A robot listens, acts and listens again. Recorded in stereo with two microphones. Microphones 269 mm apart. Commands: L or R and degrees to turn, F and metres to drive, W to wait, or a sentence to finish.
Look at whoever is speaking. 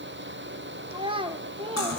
R20
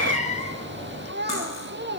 R140
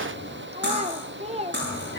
R25
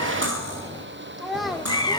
Facing the child speaking.